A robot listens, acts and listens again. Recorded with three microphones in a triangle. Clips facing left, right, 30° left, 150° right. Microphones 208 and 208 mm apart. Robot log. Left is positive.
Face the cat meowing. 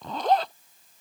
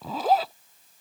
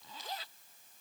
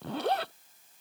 cmd idle
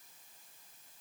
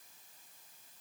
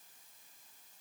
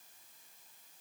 cmd idle
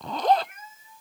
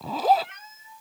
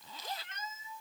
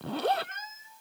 note: The cat meowing: 110° right.
cmd yaw -110
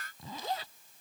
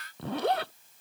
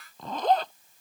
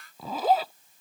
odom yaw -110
cmd idle
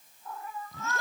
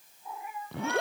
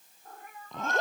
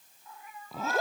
note: The cat meowing is now 15° right.
cmd yaw -15
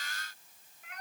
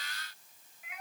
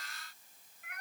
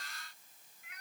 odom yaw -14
end: Facing the cat meowing.